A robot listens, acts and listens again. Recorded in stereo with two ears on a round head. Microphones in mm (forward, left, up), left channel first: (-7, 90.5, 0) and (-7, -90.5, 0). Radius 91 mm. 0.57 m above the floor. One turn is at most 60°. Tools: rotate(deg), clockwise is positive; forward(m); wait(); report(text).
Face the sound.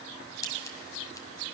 rotate(-20)
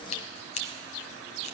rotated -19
rotate(-60)
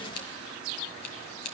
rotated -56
rotate(-60)
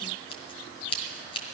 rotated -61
rotate(-25)
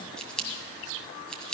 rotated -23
report("Facing the scissors.")